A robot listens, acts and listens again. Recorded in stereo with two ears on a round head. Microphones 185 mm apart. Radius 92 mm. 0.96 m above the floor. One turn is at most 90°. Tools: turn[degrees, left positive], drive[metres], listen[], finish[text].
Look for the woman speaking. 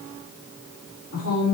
Action: turn[90]
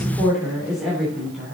Action: finish[Found it: a woman speaking, straight ahead, 2 to 4 m away.]